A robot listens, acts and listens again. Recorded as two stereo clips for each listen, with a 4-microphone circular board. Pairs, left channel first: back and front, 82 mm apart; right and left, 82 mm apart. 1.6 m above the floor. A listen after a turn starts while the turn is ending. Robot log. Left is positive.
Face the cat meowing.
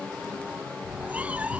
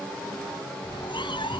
note: The cat meowing: 75° right.
cmd yaw -75
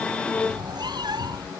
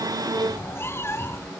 note: The cat meowing is now 30° right.
cmd yaw -30
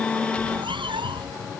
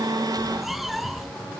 end: Facing the cat meowing.